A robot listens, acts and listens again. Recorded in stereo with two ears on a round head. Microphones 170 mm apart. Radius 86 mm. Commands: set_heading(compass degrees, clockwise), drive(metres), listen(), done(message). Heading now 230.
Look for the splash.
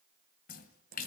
set_heading(185)
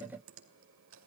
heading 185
listen()
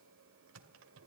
done("I heard a splash, but can't make it out now. It was about straight ahead or 90° left.")